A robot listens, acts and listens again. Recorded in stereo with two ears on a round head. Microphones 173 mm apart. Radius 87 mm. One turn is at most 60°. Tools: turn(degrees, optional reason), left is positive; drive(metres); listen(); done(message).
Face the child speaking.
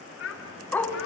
turn(degrees=60)
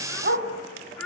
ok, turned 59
done("Found it: a child speaking, straight ahead, 2 to 4 m away.")